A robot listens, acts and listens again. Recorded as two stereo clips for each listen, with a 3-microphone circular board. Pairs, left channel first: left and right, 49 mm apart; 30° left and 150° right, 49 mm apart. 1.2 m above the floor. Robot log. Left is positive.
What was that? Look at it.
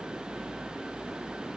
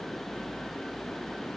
cmd idle
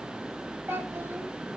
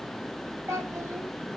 note: The child speaking: 130° right.
cmd yaw -130
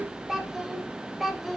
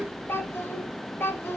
end: Found it: a child speaking, straight ahead, 2 to 4 m away.